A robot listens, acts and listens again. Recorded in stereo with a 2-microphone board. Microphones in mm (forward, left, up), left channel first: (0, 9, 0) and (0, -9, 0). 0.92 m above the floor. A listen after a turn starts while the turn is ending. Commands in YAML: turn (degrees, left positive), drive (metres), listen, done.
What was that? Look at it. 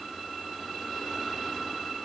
listen: true
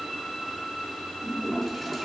turn: 30
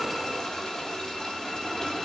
turn: 140
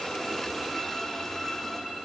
listen: true
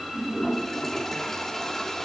turn: 20
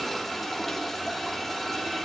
done: "Facing the toilet flushing."